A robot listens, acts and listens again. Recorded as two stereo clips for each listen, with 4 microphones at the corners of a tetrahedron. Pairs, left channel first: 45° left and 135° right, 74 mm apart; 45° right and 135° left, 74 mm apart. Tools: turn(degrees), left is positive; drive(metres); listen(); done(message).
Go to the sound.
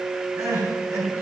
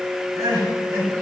turn(degrees=180)
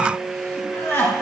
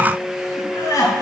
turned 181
drive(metres=1.0)
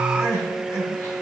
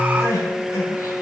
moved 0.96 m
drive(metres=1.0)
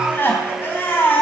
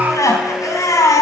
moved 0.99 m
turn(degrees=-10)
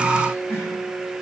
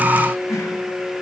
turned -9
drive(metres=1.0)
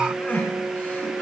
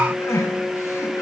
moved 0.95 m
turn(degrees=-10)
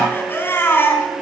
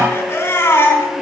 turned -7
drive(metres=1.0)
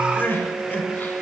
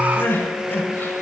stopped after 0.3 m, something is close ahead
done("I am next to the crying.")